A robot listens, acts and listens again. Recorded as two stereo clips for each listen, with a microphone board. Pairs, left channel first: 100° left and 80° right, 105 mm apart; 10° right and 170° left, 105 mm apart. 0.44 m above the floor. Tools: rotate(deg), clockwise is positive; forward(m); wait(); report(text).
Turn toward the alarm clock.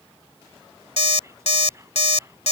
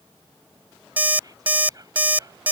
rotate(-95)
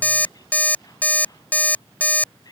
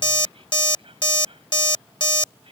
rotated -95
rotate(-25)
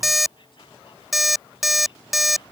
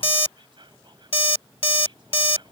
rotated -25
rotate(-10)
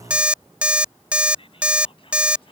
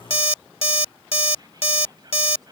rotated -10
report("Found it: an alarm clock, straight ahead.")